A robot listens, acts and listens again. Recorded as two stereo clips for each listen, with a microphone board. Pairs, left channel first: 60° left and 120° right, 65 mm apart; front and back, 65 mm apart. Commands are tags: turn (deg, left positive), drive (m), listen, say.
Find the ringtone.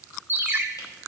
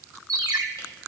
<turn deg="-175"/>
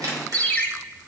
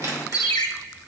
<say>Found it: a ringtone, straight ahead.</say>